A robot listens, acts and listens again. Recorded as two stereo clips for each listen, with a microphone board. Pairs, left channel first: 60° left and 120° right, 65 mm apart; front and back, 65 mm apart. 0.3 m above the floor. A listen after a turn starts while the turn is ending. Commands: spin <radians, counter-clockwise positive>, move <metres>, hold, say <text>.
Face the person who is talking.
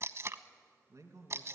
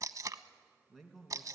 spin -1.48
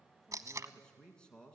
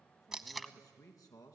spin -0.26
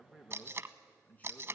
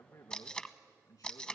say Facing the man speaking.